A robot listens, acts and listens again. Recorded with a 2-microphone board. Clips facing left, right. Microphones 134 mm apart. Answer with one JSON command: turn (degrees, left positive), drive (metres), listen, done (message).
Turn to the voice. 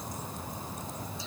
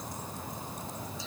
{"listen": true}
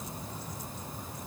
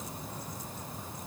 {"listen": true}
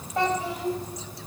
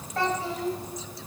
{"turn": 15}
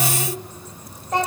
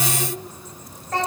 {"turn": 15}
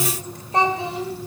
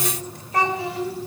{"turn": 20}
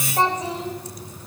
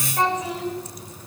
{"turn": 30}
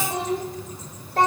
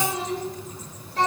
{"turn": 125}
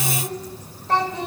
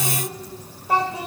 {"turn": -10}
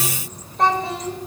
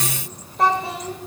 {"done": "Facing the child speaking, 2 to 4 m away."}